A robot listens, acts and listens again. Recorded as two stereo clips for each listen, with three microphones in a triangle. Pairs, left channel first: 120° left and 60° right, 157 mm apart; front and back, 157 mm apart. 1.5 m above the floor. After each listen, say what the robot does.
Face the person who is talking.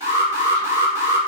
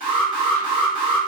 Keep listening.
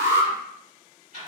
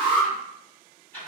Keep listening.
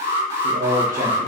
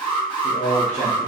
Turn 40° right.
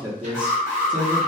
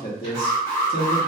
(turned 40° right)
Facing the man speaking, under 1 m away.